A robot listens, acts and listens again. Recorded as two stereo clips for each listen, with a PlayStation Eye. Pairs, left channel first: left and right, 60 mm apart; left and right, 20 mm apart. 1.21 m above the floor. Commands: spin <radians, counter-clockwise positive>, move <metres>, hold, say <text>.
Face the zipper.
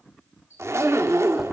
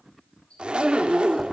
spin -0.87
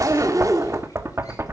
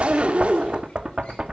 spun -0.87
spin -1.40
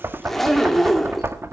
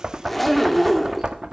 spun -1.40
say Found it: a zipper, straight ahead.